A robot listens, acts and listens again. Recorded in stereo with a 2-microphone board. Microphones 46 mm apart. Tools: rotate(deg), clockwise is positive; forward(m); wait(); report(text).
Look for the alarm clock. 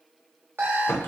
rotate(55)
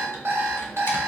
rotate(60)
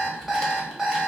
report("Facing the alarm clock.")